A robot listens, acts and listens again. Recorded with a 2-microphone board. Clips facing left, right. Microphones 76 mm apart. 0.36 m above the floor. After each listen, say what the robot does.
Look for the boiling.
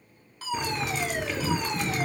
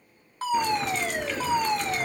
Turn 30° left.
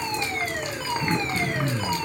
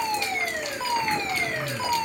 Turn 150° left.
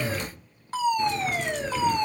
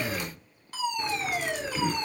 Keep listening.
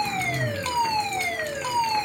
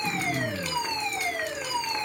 Keep listening.
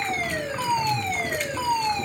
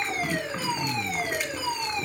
Found it: boiling, straight ahead, 2 to 4 m away.